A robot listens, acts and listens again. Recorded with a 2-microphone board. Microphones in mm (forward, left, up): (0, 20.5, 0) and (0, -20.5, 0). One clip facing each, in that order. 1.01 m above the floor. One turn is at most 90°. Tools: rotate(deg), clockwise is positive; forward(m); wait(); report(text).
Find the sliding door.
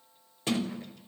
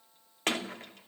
rotate(65)
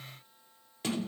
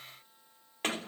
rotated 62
rotate(55)
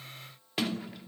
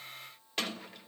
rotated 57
report("Facing the sliding door.")